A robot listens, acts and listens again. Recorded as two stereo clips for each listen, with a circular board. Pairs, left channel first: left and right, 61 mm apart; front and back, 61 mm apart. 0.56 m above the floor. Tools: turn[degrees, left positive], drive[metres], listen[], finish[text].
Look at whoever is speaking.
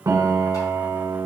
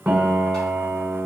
Action: listen[]
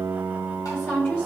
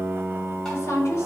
Thought: The woman speaking: 40° left.
Action: turn[40]
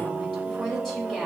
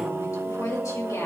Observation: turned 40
Action: finish[Found it: a woman speaking, straight ahead.]